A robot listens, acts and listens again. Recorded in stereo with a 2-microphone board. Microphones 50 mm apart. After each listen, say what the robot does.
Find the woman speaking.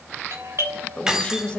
Turn 20° left.
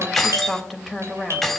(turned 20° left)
Found it: a woman speaking, straight ahead.